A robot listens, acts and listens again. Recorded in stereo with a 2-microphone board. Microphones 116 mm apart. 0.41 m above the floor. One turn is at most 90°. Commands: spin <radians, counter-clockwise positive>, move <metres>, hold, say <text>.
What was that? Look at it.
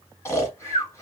spin 0.44
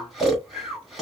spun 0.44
say Found it: snoring, straight ahead, 1 to 2 m away.